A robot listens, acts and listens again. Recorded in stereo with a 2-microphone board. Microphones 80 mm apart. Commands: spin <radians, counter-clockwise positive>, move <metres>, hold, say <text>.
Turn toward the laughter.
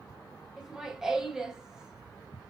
spin -0.52
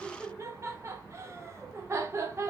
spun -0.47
spin -2.53
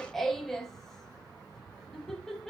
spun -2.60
say Facing the laughter, under 1 m away.